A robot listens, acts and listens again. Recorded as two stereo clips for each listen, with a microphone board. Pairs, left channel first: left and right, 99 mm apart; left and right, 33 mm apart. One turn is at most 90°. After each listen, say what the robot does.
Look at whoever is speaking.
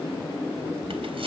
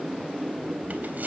Keep listening.
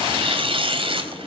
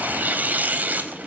Keep listening.
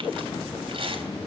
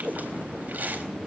I can't make out anyone speaking, only tearing paper.